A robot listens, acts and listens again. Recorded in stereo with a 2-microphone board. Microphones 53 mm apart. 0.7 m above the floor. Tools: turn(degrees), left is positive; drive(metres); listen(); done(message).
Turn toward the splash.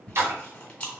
turn(degrees=-55)
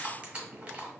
listen()
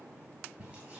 done("I heard a splash, but can't make it out now. It was about straight ahead or 70° right.")